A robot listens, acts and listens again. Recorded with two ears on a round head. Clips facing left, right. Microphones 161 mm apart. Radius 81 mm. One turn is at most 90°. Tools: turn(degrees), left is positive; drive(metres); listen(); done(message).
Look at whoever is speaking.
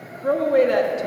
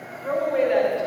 turn(degrees=55)
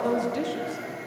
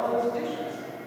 turn(degrees=55)
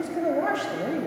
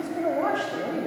turn(degrees=15)
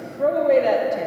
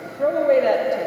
done("Found it: a woman speaking, straight ahead.")